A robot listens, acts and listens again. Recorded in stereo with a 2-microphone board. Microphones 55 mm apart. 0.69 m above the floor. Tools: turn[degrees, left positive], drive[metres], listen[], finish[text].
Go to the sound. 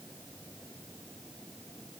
Action: listen[]
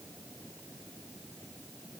Action: listen[]
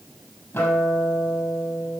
Thought: The guitar: about 55° left or 125° left.
Action: turn[55]
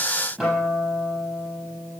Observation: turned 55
Action: drive[1.0]
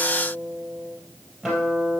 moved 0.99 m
Action: drive[1.0]
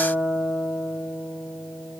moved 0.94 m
Action: drive[1.0]
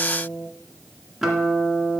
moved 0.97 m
Action: drive[1.0]
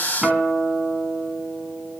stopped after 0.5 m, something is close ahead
Action: finish[I am next to the guitar.]